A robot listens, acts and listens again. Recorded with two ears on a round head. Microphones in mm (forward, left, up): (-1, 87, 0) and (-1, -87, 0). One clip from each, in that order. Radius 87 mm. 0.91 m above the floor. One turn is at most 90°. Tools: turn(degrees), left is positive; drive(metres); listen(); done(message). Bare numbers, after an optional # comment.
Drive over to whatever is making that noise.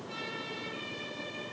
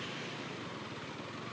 listen()
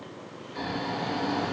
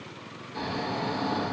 # The snoring: about 55° right or 125° right.
turn(-55)
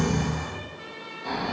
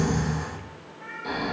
drive(1.0)
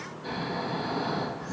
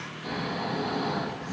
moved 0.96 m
drive(1.0)
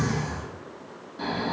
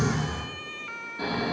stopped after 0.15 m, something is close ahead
done("Arrived at the snoring, straight ahead.")